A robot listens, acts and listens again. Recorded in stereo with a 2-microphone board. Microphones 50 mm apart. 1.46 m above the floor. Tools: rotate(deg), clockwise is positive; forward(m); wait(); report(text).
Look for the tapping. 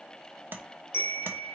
rotate(40)
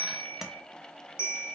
report("Found it: tapping, straight ahead.")